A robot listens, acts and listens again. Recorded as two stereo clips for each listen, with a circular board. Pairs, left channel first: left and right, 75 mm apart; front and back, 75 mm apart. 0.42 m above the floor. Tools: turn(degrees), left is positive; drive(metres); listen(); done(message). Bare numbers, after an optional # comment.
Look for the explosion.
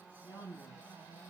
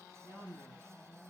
listen()
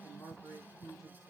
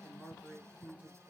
listen()
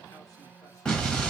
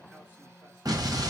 # The explosion: 165° left.
turn(165)
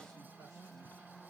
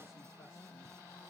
done("Facing where the explosion came from. I can't hear it now.")